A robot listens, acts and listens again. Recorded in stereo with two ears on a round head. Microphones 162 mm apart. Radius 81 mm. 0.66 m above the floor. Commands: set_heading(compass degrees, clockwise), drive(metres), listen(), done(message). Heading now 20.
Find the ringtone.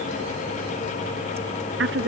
listen()
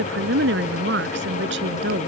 listen()
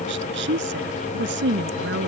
done("I can't make out a ringtone to turn to.")